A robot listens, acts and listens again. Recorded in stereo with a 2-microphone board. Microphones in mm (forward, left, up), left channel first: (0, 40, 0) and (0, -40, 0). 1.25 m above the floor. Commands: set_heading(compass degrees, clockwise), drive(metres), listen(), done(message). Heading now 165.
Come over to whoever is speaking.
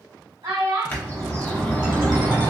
set_heading(240)
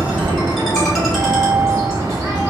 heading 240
listen()
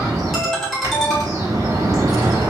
listen()
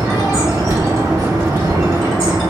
done("I heard a child speaking, but can't make it out now. It was about straight ahead or 30° right. I did not reach it.")